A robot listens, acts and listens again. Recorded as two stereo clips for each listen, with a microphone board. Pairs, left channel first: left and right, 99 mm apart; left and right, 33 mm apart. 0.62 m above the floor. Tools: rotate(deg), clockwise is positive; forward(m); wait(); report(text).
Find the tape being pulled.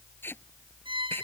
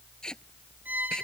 rotate(-20)
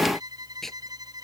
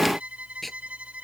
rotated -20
report("Found it: tape being pulled, straight ahead.")